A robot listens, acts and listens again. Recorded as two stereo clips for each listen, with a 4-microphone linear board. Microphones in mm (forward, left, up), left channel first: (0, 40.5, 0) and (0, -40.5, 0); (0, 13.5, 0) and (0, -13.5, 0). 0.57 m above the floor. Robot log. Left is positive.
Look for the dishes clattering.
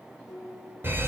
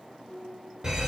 note: The dishes clattering: about 45° left or 135° left.
cmd yaw +45
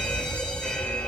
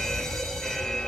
cmd idle
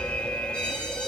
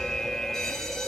cmd idle
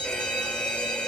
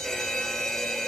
end: I heard dishes clattering, but can't make it out now. It was about straight ahead or 90° left.